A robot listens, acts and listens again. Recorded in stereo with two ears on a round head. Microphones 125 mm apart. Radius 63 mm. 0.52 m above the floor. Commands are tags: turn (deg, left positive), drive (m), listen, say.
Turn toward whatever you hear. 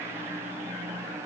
<listen/>
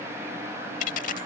<turn deg="55"/>
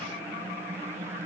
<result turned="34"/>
<listen/>
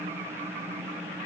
<say>I heard a dropped coin, but can't make it out now. It was about 25° left or 90° left.</say>